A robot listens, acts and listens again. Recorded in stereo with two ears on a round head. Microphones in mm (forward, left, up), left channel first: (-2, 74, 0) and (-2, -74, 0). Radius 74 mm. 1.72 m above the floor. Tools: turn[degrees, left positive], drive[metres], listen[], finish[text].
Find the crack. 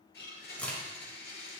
Action: turn[30]
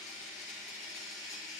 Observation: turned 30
Action: listen[]
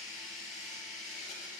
Action: finish[I heard a crack, but can't make it out now. It was about 20° right or 140° left.]